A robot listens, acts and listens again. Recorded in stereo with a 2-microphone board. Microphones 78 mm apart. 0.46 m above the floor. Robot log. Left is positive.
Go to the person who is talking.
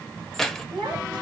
cmd yaw -90
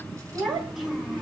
note: So it is at 10° right.
cmd yaw -10
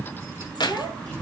cmd fwd 1.0
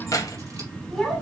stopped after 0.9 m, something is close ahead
end: Something is in my way. I am facing the child speaking but have not reached it.